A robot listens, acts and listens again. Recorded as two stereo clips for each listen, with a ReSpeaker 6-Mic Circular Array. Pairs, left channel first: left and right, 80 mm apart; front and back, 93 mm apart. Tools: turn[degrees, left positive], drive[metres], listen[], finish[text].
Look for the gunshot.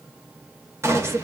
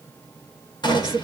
Thought: The gunshot: 35° right.
Action: turn[-35]
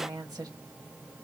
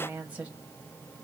Action: finish[Facing where the gunshot came from. I can't hear it now.]